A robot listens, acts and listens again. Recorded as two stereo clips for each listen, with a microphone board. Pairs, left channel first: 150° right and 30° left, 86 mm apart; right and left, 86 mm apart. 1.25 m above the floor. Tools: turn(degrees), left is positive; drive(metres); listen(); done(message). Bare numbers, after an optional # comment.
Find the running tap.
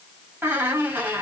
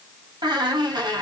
listen()
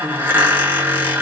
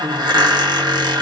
listen()
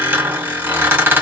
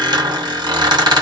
done("I can't make out a running tap to turn to.")